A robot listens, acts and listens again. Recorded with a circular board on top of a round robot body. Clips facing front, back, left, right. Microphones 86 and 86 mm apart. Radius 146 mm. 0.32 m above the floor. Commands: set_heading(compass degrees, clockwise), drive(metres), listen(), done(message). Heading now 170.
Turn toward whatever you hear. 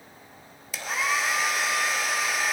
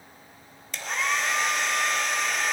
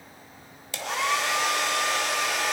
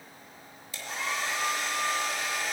set_heading(85)
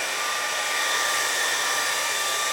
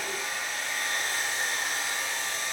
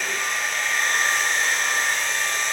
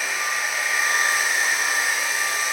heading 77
done("Facing the hair dryer.")